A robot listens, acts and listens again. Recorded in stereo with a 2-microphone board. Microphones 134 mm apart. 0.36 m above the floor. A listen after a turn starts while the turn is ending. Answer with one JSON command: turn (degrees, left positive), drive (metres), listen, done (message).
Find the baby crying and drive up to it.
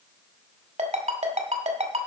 {"listen": true}
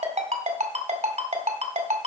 {"listen": true}
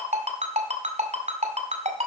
{"done": "I can't make out a baby crying to turn to."}